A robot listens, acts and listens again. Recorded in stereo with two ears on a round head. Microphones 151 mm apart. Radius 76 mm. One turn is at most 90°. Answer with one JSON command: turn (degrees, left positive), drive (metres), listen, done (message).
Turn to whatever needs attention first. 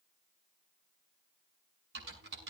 {"listen": true}
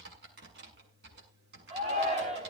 {"turn": -40}
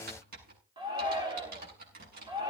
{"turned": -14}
{"turn": -25}
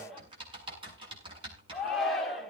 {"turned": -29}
{"done": "Found it: a shout, straight ahead."}